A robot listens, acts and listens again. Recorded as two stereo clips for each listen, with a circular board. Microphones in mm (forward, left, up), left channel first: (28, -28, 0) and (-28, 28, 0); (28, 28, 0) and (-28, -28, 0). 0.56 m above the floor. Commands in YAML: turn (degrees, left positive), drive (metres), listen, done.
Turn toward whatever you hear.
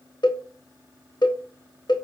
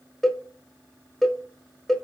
turn: -40
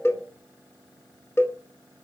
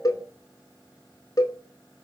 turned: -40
turn: 10
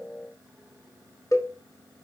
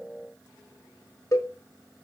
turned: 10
done: "Found it: a cowbell, straight ahead."